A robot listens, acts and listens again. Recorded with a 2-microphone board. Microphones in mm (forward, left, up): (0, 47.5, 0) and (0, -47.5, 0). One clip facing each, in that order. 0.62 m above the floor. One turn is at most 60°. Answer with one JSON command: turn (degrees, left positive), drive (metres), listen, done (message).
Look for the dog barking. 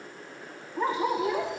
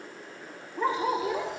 {"turn": 40}
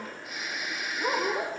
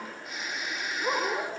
{"turn": 60}
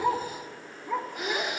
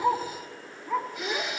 {"turn": 40}
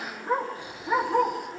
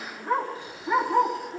{"done": "Facing the dog barking."}